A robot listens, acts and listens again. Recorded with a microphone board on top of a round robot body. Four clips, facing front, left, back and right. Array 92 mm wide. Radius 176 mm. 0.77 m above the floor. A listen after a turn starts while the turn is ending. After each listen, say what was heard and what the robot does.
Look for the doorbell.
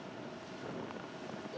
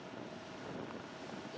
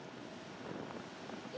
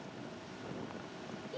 Keep listening.
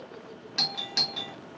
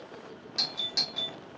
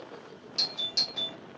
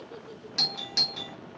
The doorbell: 20° right. Turn 20° right.
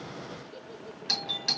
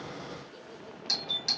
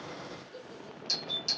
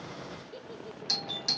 Facing the doorbell.